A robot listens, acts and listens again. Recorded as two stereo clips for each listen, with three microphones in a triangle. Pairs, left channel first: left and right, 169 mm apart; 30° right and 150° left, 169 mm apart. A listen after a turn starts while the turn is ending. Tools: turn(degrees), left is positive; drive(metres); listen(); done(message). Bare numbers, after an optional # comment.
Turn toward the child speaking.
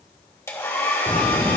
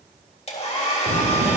# The child speaking: 175° left.
turn(175)
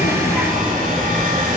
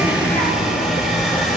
# The child speaking is now 25° right.
turn(-25)
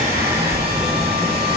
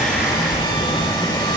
# The child speaking is now 10° right.
turn(-10)
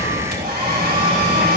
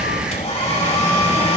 done("Found it: a child speaking, straight ahead, 2 to 4 m away.")